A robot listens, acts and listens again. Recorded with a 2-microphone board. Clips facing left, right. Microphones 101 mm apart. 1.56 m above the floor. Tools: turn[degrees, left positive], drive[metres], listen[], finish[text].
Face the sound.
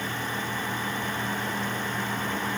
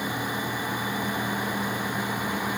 Action: listen[]
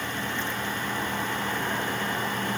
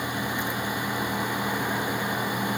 Action: listen[]
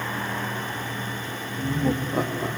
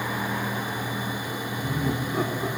Thought: The laughter: about 60° left or 120° left.
Action: turn[60]
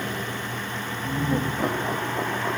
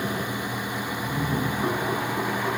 Thought: So it is at 55° left.
Action: turn[55]
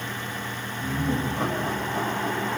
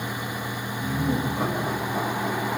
Action: finish[Found it: laughter, straight ahead, 2 to 4 m away.]